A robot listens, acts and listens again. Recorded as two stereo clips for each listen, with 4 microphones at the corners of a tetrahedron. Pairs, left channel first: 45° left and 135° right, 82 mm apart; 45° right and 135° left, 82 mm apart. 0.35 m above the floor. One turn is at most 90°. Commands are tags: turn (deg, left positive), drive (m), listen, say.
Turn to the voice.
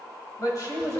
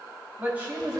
<turn deg="70"/>
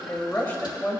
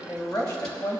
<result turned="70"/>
<turn deg="-20"/>
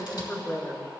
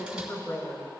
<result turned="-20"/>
<turn deg="-20"/>
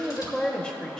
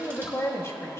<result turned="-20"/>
<turn deg="-30"/>
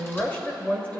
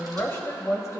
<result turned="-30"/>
<turn deg="-25"/>
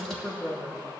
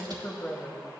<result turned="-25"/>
<say>Found it: a woman speaking, straight ahead, 1 to 2 m away.</say>